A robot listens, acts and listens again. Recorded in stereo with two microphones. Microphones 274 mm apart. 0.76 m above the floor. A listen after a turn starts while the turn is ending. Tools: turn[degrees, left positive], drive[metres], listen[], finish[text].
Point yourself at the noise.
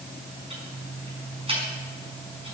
Thought: The ticking: about 20° right or 160° right.
Action: turn[-20]
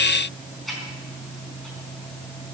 Action: finish[Facing the ticking, over 4 m away.]